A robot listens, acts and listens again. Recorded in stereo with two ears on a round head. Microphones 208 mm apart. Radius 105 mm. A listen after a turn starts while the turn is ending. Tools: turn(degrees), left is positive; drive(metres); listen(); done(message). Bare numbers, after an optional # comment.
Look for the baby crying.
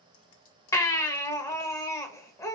turn(30)
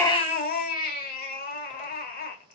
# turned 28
# So it is at 140° left.
turn(140)
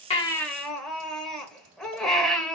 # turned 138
done("Facing the baby crying.")